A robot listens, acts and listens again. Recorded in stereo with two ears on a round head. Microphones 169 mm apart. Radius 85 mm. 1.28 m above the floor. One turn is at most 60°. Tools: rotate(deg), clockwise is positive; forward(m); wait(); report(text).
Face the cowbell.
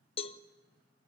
rotate(-30)
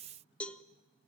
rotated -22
report("Facing the cowbell.")